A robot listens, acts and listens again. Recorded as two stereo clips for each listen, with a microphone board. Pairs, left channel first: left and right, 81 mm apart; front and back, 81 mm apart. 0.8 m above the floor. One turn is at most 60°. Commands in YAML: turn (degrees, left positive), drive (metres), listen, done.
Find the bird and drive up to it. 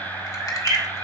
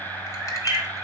turn: -60
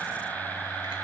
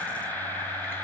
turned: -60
turn: -60
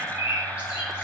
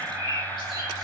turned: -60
turn: -15
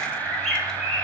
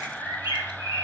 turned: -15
drive: 1.0
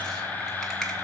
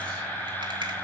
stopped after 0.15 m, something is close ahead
listen: true
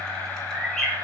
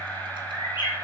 done: "Blocked. The bird is further on, straight ahead."